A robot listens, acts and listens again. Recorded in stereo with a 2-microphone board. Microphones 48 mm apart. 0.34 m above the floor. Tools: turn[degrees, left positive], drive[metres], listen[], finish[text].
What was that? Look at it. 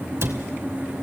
Thought: The cupboard door: about 65° right or 115° right.
Action: turn[-65]
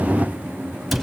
Action: finish[Found it: a cupboard door, straight ahead.]